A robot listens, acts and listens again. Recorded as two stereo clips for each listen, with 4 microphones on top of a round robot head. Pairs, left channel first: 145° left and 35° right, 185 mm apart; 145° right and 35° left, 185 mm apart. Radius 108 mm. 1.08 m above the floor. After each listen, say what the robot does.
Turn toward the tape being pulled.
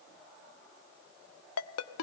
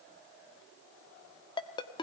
Keep listening.
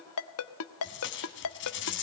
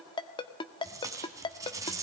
Turn 110° left.
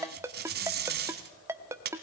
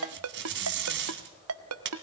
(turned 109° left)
Facing the tape being pulled.